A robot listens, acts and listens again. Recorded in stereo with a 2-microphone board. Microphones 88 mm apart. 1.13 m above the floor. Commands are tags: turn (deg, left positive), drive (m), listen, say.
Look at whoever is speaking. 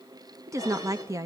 <turn deg="-35"/>
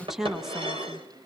<say>Facing the woman speaking.</say>